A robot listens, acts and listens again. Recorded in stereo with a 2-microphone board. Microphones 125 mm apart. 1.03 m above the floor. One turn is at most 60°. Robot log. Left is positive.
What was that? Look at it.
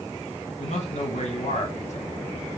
note: The man speaking: about 65° left or 115° left.
cmd yaw +60
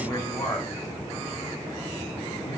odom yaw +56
note: So it is at 30° left.
cmd yaw +30
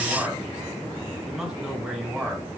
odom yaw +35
end: Found it: a man speaking, straight ahead.